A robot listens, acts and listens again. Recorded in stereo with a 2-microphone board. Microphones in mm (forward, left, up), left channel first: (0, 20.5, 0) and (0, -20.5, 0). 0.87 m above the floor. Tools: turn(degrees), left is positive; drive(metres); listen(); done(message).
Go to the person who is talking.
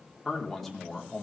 turn(degrees=30)
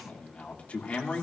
turn(degrees=145)
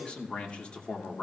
turn(degrees=30)
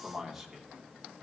drive(metres=1.0)
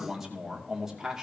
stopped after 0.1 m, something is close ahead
turn(degrees=-10)
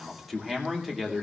done("Something is in my way. I am facing the man speaking but have not reached it.")